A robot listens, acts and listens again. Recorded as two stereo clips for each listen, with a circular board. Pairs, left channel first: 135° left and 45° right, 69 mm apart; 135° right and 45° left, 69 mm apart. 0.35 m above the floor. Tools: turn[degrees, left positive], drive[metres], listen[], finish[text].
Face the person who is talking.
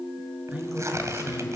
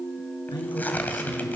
Thought: The man speaking: 115° right.
Action: turn[-115]
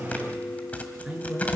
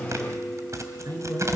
Thought: The man speaking is now 30° left.
Action: turn[30]
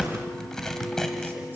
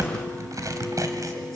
Action: listen[]
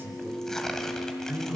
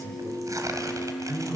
Thought: The man speaking is now 15° left.
Action: turn[15]
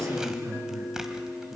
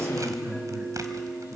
Action: finish[Facing the man speaking, over 4 m away.]